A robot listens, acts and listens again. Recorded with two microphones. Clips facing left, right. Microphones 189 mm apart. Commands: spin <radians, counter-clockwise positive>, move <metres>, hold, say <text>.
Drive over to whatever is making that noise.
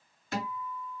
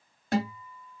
spin -0.96
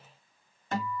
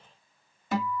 spin -0.17
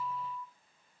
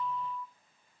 move 1.0
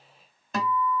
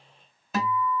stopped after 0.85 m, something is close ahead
say I am next to the guitar.